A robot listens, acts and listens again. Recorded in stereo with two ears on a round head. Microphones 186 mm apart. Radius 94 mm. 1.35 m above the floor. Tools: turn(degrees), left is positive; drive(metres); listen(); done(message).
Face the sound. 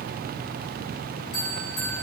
turn(degrees=70)
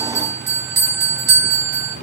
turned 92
turn(degrees=-15)
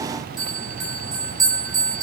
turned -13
done("Facing the bell.")